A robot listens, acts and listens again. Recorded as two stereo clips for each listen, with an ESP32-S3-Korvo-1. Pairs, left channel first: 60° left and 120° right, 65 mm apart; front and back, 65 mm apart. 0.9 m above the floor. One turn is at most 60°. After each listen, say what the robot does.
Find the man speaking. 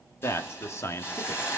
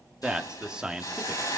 Turn 60° left.
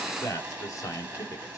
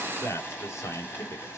Turn 40° left.
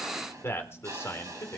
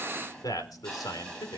Turn 10° left.
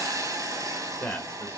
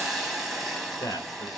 Found it: a man speaking, straight ahead.